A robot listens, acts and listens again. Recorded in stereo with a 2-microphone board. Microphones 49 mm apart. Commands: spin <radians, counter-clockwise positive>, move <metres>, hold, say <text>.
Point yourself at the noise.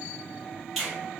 spin -0.52
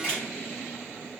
spin 0.44
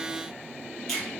say Found it: a finger snap, straight ahead, 1 to 2 m away.